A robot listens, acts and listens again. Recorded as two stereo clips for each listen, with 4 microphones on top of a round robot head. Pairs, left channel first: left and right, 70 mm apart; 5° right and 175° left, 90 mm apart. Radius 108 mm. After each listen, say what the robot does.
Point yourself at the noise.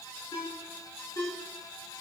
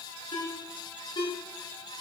Turn 35° left.
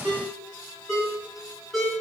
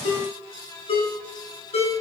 Found it: a ringtone, straight ahead, 2 to 4 m away.